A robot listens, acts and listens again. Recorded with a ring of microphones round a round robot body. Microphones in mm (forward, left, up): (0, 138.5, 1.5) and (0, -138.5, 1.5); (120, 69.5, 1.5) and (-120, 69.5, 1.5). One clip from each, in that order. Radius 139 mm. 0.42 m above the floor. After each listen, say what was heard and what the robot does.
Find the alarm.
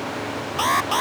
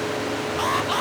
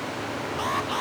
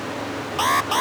The alarm: 155° left. Turn 155° left.
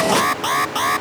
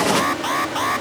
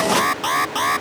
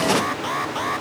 The alarm is now 15° left. Turn 15° left.
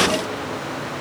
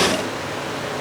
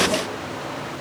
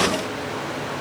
Keep listening.
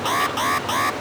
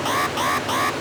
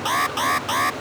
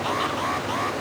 Found it: an alarm, straight ahead.